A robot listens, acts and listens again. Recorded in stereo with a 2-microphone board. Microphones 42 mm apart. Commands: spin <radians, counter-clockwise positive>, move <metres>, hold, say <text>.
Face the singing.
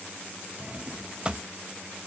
hold
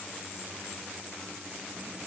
hold
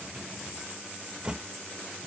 say I can't make out singing, only a drawer.